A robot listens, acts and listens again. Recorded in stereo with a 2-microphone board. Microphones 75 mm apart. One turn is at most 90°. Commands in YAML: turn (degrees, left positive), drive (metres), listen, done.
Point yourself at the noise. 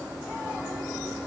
listen: true
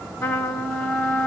turn: 30
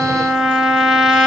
done: "Found it: a trumpet, straight ahead, under 1 m away."